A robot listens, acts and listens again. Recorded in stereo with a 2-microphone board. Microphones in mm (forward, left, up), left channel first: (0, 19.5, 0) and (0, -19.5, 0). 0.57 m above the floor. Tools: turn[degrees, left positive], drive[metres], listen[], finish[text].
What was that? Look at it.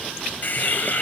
Thought: The hiss: about 50° left or 130° left.
Action: turn[50]
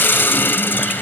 Thought: So it is at 75° left.
Action: turn[75]
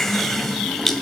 Thought: The hiss is now 10° left.
Action: turn[10]
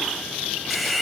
Action: finish[Facing the hiss, 2 to 4 m away.]